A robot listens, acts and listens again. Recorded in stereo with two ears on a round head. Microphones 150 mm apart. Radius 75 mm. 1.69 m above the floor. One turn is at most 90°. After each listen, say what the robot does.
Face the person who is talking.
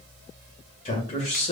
Turn 35° left.
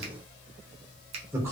Turn 15° right.
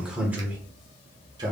Turn 25° right.
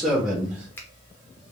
Turn 10° right.
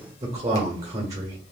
Turn 20° right.
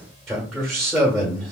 Found it: a man speaking, straight ahead.